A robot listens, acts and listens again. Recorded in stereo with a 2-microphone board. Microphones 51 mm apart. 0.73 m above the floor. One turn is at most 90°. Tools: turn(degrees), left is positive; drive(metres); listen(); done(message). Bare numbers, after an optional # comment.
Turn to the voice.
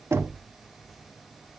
listen()
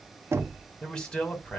# The man speaking: about 15° left or 165° left.
turn(15)
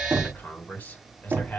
# So it is at 150° left.
turn(90)
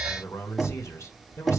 # The man speaking is now 85° left.
turn(85)
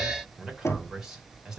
# The man speaking is now 15° right.
turn(-15)
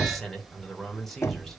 done("Facing the man speaking, 2 to 4 m away.")